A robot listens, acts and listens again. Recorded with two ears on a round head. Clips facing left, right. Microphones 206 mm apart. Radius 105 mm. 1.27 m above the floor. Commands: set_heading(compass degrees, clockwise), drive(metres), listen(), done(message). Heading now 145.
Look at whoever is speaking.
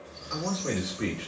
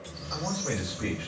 set_heading(100)
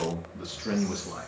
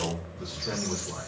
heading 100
set_heading(350)
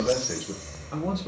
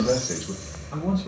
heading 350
set_heading(335)
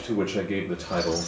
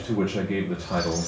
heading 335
set_heading(325)
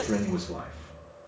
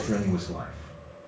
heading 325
done("Found it: a man speaking, straight ahead.")